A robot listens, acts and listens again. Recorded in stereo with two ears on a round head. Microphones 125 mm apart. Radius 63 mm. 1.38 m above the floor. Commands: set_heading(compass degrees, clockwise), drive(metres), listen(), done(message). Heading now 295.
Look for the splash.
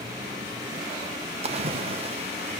set_heading(340)
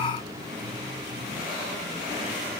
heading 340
listen()
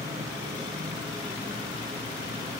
done("I heard a splash, but can't make it out now. It was about straight ahead or 90° right.")